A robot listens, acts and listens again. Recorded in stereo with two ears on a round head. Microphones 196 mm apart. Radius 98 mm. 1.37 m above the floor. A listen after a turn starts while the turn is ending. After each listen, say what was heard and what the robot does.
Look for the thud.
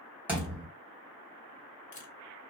Turn 30° right.
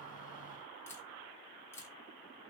Keep listening.
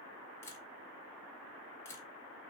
I heard a thud, but can't make it out now. It was about 20° left or 140° right.